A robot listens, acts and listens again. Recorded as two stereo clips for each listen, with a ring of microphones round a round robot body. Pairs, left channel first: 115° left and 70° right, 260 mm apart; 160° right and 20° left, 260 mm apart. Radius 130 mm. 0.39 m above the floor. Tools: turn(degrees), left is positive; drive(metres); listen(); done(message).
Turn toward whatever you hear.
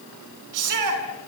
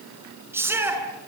turn(degrees=-60)
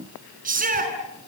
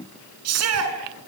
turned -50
turn(degrees=-10)
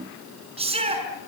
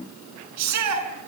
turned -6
done("Found it: a shout, straight ahead.")